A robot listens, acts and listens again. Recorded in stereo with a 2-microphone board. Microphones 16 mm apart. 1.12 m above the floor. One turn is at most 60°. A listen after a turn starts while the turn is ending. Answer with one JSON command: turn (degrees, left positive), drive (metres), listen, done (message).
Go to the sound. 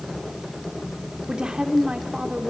{"turn": -60}
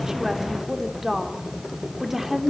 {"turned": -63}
{"turn": -15}
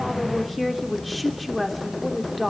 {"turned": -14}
{"drive": 1.0}
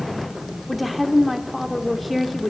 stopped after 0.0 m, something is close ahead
{"done": "Something is in my way. I am facing the woman speaking but have not reached it."}